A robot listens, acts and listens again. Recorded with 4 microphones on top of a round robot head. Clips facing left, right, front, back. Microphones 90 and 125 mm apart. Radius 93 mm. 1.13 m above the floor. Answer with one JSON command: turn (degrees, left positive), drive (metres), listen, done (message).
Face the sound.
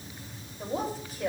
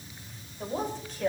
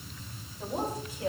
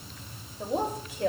{"turn": 170}
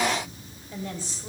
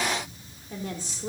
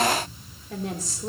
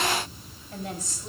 {"turn": -40}
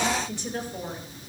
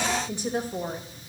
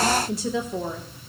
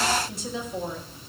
{"turn": -30}
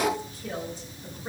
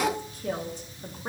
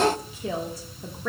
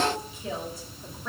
{"turn": -20}
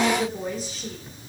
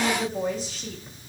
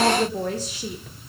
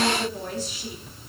{"done": "Found it: a woman speaking, straight ahead."}